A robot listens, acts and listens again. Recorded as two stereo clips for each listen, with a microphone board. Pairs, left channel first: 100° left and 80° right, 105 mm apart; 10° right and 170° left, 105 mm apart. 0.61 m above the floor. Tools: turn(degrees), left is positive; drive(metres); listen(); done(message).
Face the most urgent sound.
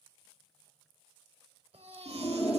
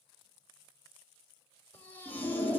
turn(degrees=-85)
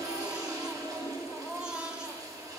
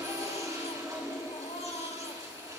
done("Found it: a baby crying, straight ahead, 1 to 2 m away.")